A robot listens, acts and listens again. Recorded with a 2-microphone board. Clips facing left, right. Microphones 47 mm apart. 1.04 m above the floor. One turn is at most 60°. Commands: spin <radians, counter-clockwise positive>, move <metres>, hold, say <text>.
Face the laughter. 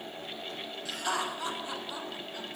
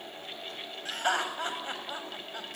spin -0.79
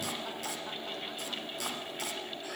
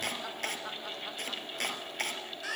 hold
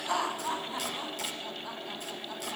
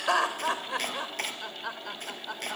spin -1.05
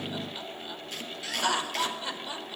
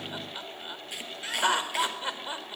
spin -0.44
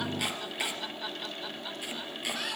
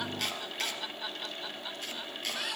say Found it: laughter, straight ahead.